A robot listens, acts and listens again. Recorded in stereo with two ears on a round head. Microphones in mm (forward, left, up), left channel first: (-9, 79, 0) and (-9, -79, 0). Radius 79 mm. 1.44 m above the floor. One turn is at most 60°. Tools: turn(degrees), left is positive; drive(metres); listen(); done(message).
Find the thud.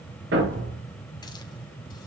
turn(degrees=-60)
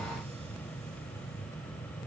turn(degrees=-30)
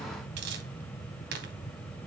done("Facing where the thud came from. I can't hear it now.")